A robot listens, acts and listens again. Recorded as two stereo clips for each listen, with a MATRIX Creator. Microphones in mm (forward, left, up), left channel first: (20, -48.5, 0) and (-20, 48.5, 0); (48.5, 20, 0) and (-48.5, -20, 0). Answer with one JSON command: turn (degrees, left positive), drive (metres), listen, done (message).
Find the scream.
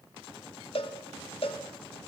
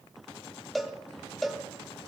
{"listen": true}
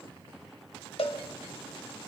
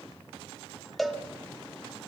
{"listen": true}
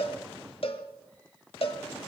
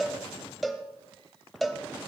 {"done": "I can't make out a scream to turn to."}